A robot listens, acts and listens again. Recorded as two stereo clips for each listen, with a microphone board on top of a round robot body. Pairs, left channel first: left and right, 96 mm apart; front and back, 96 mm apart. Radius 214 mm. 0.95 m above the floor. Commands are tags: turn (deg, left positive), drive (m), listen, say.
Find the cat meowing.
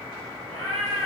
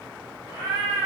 <turn deg="-120"/>
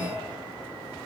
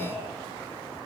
<listen/>
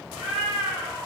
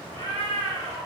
<say>Found it: a cat meowing, straight ahead.</say>